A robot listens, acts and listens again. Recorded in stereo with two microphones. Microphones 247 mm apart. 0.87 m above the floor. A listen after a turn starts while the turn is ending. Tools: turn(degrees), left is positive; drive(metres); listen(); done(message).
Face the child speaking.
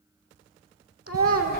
turn(degrees=-70)
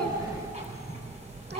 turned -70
listen()
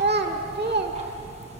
turn(degrees=-40)
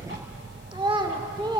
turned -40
turn(degrees=-20)
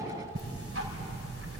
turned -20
listen()
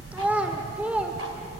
done("Found it: a child speaking, straight ahead, 1 to 2 m away.")